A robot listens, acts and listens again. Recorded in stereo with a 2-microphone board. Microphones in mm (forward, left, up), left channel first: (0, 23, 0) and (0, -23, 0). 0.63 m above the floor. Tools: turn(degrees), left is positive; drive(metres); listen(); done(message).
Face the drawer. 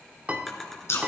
turn(degrees=30)
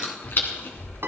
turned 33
listen()
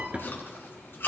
turn(degrees=-30)
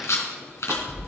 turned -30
listen()
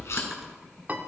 listen()
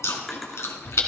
done("I heard a drawer from this way, but can't make it out now.")